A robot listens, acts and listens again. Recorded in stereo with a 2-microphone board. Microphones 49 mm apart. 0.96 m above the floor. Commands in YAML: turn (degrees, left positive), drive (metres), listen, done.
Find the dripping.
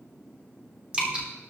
turn: -25
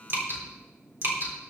turn: -130
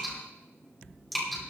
done: "Found it: dripping, straight ahead."